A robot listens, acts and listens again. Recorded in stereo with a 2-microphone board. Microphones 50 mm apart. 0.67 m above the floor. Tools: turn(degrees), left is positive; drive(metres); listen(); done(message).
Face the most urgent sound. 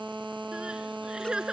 turn(degrees=-15)
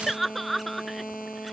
done("Facing the crying.")